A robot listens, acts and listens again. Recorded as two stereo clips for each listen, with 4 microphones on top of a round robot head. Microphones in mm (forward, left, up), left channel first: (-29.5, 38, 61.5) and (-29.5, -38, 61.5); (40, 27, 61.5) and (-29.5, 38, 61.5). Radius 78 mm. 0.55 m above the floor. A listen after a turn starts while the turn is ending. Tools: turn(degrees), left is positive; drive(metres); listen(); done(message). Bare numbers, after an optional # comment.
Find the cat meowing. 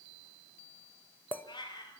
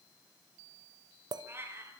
# The cat meowing: 115° left.
turn(115)
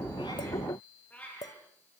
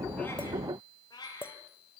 # The cat meowing is now 15° left.
turn(15)
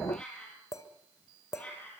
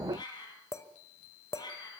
# The cat meowing is now 15° left.
turn(15)
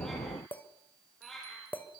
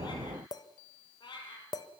done("Facing the cat meowing.")